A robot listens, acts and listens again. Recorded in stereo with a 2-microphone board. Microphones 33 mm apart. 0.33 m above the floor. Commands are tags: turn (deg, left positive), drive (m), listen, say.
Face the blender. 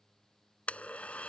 <turn deg="45"/>
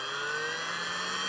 <say>Facing the blender.</say>